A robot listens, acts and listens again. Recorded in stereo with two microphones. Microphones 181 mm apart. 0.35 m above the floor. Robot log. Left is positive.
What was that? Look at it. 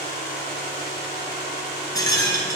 note: The rattle: about 20° left or 160° left.
cmd yaw +20
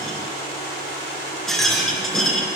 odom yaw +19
end: Found it: a rattle, straight ahead.